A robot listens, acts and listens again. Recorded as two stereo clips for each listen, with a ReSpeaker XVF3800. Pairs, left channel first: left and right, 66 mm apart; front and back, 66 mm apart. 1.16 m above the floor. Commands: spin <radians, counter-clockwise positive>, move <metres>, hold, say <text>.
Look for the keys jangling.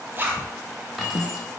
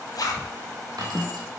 spin -3.05
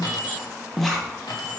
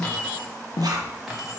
spin 1.57
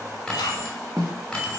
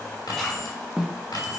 spin 0.17
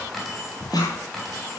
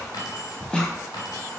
say Facing the keys jangling, 2 to 4 m away.